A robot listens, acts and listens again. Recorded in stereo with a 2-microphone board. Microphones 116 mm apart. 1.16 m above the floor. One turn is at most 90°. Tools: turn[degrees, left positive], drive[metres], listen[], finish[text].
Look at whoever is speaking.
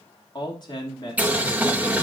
Thought: The man speaking: about 40° left or 140° left.
Action: turn[40]
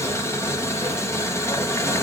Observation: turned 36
Action: listen[]
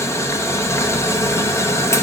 Action: listen[]
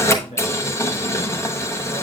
Thought: So it is at 100° left.
Action: turn[90]
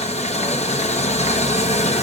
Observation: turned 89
Thought: Nothing new. It was at 10° left.
Action: turn[10]
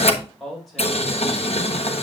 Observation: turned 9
Action: finish[Found it: a man speaking, straight ahead, over 4 m away.]